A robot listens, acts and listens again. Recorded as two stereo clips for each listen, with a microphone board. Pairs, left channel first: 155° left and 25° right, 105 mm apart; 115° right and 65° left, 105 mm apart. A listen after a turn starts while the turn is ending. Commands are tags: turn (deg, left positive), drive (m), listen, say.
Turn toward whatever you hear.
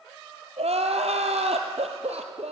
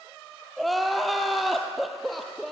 <turn deg="-25"/>
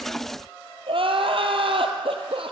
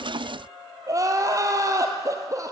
<turn deg="10"/>
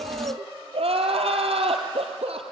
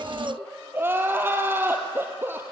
<say>Found it: crying, straight ahead, 2 to 4 m away.</say>